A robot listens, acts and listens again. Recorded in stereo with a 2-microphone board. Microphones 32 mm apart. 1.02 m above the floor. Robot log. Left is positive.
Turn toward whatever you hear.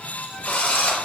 note: The drill: about 65° left or 115° left.
cmd yaw +65
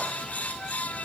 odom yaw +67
cmd idle
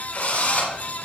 note: So it is at 50° left.
cmd yaw +50
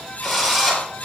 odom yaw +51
end: Facing the drill, over 4 m away.